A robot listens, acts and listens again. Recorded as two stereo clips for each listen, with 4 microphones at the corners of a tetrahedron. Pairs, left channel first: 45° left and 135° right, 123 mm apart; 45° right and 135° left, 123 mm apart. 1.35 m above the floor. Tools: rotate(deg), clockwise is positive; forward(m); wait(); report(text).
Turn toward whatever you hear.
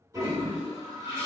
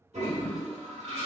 rotate(-165)
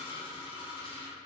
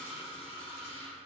report("Found it: a toilet flushing, straight ahead, 1 to 2 m away.")